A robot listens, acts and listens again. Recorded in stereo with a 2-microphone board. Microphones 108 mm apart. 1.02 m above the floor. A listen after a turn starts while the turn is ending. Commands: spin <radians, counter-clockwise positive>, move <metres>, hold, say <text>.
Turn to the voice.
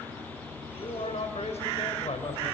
spin 1.57
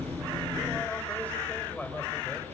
spin 0.26
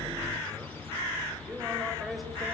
say Facing the man speaking, over 4 m away.